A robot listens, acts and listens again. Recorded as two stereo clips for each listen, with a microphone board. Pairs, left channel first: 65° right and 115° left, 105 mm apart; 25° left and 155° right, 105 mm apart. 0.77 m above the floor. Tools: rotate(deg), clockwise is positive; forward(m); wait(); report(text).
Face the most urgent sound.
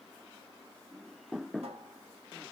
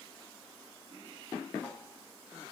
wait()
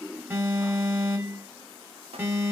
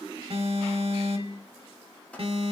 rotate(175)
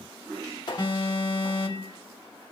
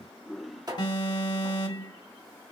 rotate(20)
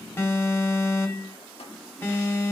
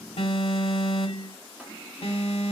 report("Found it: an alarm, straight ahead, 1 to 2 m away.")